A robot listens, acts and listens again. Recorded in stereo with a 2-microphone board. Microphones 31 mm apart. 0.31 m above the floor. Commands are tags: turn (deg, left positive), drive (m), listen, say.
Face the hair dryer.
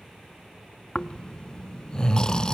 <listen/>
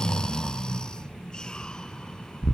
<listen/>
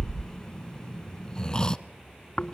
<say>I can't make out a hair dryer to turn to.</say>